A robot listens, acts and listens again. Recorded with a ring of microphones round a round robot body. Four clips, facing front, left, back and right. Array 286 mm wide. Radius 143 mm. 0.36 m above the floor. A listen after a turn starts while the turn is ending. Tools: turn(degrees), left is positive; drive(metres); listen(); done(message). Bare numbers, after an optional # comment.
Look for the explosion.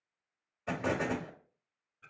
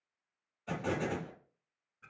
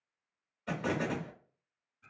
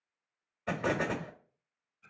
# The explosion: 75° right.
turn(-75)
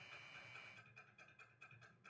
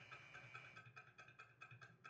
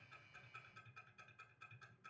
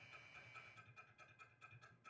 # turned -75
done("I heard an explosion from this way, but can't make it out now.")